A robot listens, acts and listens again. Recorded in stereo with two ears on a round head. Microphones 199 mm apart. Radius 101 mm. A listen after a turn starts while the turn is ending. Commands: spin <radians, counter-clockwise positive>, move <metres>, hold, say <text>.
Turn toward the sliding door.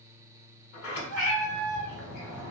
spin 0.96
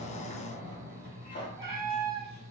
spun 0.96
spin 0.87
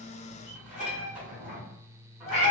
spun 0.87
spin -0.17
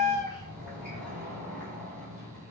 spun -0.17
say Facing the sliding door.